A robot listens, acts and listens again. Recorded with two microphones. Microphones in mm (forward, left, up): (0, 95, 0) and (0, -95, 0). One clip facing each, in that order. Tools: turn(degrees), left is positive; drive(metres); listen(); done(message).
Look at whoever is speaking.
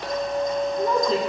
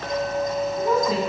turn(degrees=-30)
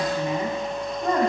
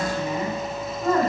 turn(degrees=20)
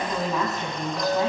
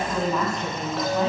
done("Facing the woman speaking.")